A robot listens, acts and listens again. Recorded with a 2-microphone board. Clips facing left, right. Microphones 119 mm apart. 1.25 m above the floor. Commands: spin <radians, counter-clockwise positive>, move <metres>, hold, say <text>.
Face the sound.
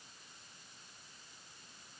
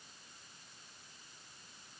hold
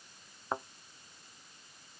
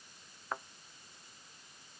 spin 0.44
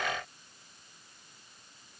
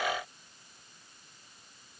hold
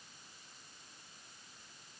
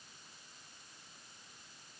say I heard a thud, but can't make it out now. It was about straight ahead or 130° left.